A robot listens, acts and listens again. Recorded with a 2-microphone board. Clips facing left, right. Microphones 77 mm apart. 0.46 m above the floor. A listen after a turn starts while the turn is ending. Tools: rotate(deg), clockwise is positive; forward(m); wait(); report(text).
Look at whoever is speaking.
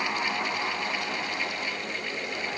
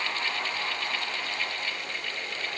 wait()
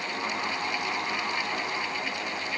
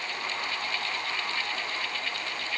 wait()
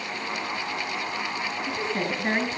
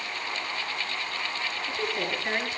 rotate(-30)
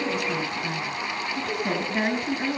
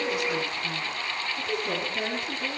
rotate(-120)
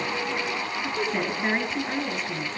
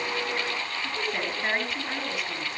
report("Facing the woman speaking.")